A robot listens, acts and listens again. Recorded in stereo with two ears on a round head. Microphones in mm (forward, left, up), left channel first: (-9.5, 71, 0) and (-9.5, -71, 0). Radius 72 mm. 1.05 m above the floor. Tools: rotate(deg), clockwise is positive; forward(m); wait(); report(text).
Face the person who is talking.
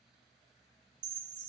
wait()
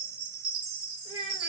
rotate(-35)
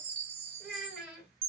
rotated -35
report("Facing the child speaking.")